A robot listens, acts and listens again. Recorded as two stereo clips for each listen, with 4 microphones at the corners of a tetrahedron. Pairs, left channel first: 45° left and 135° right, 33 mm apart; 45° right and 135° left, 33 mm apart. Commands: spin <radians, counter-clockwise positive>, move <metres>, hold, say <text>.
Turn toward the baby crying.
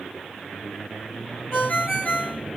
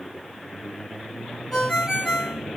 hold
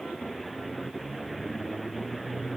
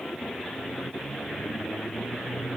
hold
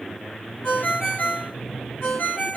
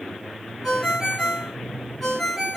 say I can't make out a baby crying to turn to.